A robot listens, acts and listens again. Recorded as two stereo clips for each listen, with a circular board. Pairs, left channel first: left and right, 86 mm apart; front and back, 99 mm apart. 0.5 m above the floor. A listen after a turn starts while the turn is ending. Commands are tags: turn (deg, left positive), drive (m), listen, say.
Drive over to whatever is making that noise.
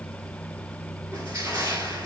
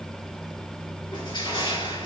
<turn deg="-35"/>
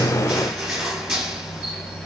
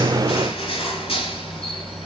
<turn deg="-10"/>
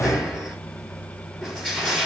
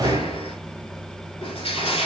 <drive m="1.0"/>
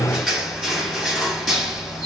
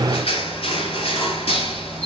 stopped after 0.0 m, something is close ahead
<say>Something is in my way. I am facing the crushing but have not reached it.</say>